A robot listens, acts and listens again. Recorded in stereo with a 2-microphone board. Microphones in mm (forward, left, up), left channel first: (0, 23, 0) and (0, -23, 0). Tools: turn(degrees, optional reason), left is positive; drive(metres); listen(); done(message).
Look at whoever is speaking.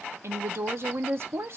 turn(degrees=-60, reason="The woman speaking: about 60° right or 120° right.")
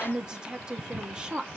turn(degrees=-20, reason="So it is at 20° right.")
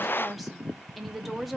done("Facing the woman speaking, under 1 m away.")